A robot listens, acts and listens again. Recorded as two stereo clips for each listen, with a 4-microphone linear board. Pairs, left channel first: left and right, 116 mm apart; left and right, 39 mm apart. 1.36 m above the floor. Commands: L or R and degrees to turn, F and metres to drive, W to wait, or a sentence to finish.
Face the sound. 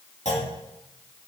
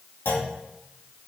L90
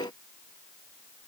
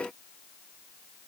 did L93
I heard a clunk from this way, but can't make it out now.